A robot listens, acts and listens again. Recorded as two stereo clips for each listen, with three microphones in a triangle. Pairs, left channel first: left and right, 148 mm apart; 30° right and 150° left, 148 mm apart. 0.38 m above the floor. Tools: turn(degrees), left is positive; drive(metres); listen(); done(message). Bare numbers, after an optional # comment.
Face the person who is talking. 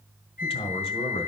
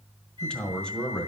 # The man speaking: 50° left.
turn(50)
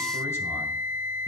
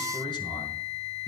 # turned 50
listen()
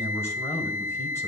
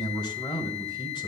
# The man speaking is now 20° left.
turn(20)
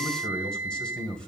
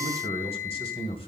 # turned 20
done("Facing the man speaking, 1 to 2 m away.")